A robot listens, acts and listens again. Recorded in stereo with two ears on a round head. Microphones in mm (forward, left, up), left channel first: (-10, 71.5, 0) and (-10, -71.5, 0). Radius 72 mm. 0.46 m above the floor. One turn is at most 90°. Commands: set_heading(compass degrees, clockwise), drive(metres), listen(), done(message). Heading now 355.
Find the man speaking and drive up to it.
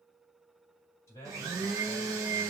set_heading(335)
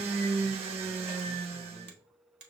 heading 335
listen()
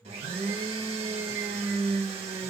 set_heading(325)
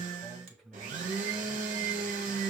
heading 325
drive(1.0)
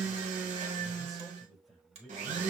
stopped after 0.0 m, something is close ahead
done("Something is in my way. I am facing the man speaking but have not reached it.")